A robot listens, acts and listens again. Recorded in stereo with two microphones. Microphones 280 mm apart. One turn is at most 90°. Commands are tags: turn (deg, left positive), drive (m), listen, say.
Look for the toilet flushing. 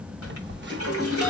<turn deg="50"/>
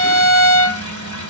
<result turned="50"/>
<listen/>
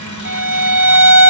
<listen/>
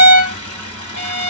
<turn deg="80"/>
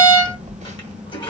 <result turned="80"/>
<turn deg="15"/>
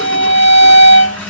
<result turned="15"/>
<listen/>
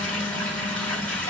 <say>Facing the toilet flushing.</say>